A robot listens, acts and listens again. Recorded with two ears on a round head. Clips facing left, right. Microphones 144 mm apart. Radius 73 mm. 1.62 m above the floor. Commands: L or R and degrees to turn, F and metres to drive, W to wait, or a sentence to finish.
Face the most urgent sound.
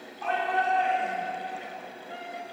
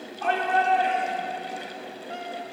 R55
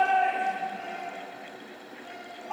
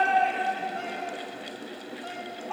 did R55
Found it: a shout, straight ahead.